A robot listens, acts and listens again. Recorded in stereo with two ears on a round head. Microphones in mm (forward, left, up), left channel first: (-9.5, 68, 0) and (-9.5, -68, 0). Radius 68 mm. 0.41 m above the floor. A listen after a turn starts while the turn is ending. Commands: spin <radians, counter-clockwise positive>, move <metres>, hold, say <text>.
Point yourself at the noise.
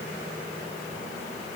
hold
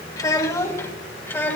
spin 0.52
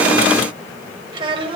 spin -0.61
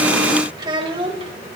spin -0.70
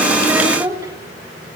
spin -0.44
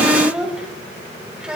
say Facing the child speaking.